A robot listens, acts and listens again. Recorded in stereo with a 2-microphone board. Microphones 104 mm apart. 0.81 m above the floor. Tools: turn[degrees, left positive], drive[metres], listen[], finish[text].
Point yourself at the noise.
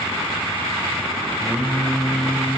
Action: turn[30]
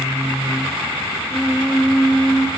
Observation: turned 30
Action: turn[30]
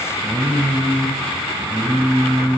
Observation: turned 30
Thought: So it is at 15° right.
Action: turn[-15]
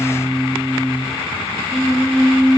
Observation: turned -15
Action: finish[Found it: singing, straight ahead, over 4 m away.]